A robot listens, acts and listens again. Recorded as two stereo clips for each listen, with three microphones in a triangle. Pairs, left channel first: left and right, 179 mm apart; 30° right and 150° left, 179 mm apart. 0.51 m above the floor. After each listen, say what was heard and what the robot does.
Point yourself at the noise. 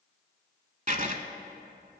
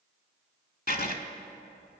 The writing: 50° right. Turn 50° right.
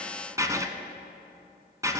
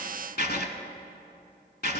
The writing is now 20° right. Turn 20° right.
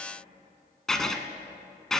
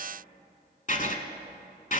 Facing the writing, under 1 m away.